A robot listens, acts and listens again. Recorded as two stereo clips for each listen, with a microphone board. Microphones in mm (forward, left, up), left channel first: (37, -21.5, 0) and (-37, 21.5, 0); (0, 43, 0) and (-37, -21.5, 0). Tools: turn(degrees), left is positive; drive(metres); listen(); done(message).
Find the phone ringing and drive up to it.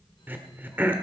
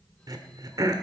listen()
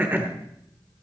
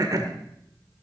listen()
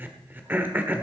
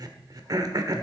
done("I can't make out a phone ringing to turn to.")